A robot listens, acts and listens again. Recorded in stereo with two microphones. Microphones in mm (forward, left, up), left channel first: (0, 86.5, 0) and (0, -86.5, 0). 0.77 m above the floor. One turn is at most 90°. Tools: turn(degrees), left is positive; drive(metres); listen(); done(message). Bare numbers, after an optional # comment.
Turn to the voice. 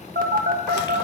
listen()
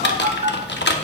listen()
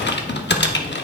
done("I can't make out anyone speaking, only a phone buzzing and typing on a keyboard.")